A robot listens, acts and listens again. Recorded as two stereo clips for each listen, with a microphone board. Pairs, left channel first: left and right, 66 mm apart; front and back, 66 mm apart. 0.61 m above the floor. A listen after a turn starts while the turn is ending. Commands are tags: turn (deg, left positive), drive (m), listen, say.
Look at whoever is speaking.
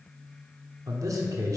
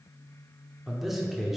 <turn deg="-95"/>
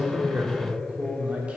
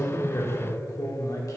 <turn deg="-20"/>
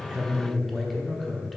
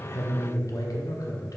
<say>Facing the man speaking.</say>